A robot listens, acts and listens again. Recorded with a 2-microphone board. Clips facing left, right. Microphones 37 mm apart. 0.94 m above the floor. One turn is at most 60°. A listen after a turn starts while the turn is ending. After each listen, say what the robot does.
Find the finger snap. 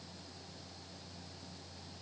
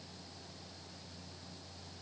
Keep listening.
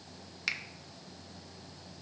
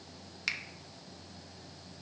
Turn 30° left.
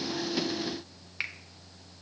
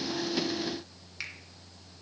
Turn 60° left.
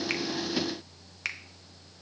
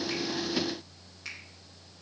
Turn 60° left.
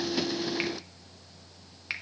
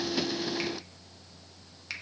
Turn 25° left.
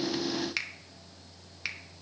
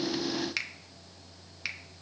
Found it: a finger snap, straight ahead.